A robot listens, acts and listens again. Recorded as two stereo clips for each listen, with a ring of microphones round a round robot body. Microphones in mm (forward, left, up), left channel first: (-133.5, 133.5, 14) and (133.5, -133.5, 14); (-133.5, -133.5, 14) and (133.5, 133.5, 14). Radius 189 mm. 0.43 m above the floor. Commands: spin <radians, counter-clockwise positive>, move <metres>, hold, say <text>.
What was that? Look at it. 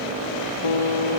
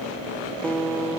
spin 2.36
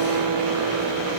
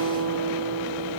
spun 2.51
say Facing the guitar.